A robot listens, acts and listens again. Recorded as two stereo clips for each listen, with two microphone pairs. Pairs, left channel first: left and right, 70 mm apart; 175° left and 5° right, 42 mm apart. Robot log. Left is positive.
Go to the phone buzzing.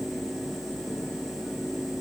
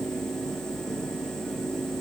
cmd idle
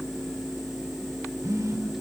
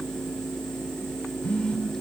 note: The phone buzzing: 130° right.
cmd yaw -130
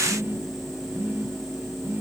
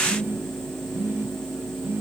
note: The phone buzzing is now 35° right.
cmd yaw -35
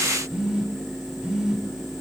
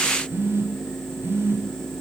note: The phone buzzing is now 10° right.
cmd yaw -10
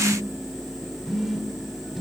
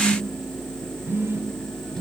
cmd fwd 1.0
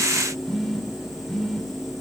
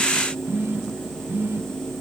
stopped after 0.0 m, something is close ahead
end: Something is in my way. I am facing the phone buzzing but have not reached it.